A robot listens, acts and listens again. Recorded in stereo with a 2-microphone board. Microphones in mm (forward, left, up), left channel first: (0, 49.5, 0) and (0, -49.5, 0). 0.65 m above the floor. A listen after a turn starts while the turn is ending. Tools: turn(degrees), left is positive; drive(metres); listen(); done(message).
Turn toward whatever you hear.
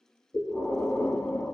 turn(degrees=25)
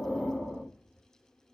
done("Found it: breathing, straight ahead.")